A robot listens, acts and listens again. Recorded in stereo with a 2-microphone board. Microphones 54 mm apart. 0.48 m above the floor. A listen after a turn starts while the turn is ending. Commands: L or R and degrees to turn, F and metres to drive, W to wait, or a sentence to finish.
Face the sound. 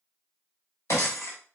L60
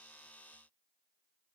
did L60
W
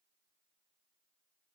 I heard breaking glass, but can't make it out now. It was about straight ahead or 60° left.